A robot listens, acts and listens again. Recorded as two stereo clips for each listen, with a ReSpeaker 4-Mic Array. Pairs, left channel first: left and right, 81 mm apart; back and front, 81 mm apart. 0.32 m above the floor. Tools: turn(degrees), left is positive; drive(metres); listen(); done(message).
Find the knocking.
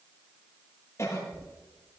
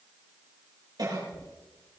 turn(degrees=160)
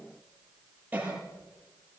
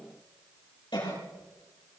listen()
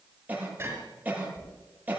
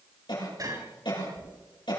turn(degrees=-35)
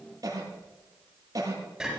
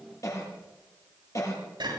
done("Found it: knocking, straight ahead.")